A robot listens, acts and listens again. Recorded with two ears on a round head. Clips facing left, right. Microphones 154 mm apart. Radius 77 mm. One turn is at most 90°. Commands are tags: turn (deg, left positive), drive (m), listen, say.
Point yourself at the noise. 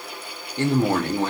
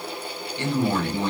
<turn deg="40"/>
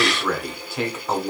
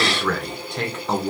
<say>Facing the man speaking, 1 to 2 m away.</say>